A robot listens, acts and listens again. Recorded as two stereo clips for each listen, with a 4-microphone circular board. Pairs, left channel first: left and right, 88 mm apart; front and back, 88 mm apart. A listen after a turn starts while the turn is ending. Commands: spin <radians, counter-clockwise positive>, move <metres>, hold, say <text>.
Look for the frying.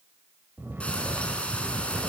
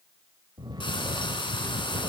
spin 0.26
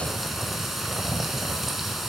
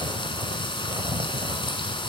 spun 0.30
say Facing the frying.